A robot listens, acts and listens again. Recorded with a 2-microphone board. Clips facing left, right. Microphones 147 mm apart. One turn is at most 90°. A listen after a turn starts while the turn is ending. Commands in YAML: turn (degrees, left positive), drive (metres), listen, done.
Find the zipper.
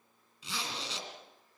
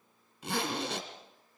turn: -55
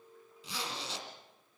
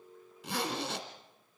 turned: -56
turn: -65
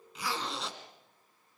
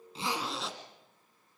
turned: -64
done: "Found it: a zipper, straight ahead."